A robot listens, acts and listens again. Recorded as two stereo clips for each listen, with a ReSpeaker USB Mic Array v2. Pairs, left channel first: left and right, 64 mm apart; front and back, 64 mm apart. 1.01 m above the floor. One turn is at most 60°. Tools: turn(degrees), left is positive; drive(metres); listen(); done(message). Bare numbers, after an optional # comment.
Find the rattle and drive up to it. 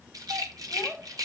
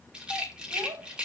# The rattle: 105° right.
turn(-60)
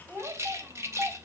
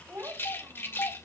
# The rattle is now 50° right.
turn(-50)
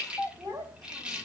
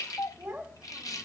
# The rattle is now 15° right.
turn(-15)
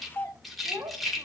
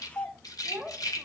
drive(1.0)
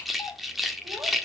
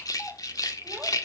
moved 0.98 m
drive(1.0)
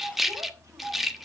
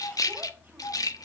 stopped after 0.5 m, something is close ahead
done("Arrived at the rattle, straight ahead.")